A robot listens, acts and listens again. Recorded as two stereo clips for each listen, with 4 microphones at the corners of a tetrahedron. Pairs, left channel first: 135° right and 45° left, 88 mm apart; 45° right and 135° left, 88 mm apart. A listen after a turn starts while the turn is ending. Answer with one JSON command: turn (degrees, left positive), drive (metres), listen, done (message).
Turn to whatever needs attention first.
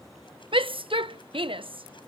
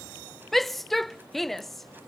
{"turn": 45}
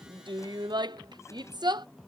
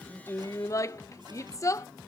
{"turn": 10}
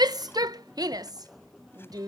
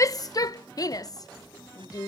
{"done": "Facing the shout."}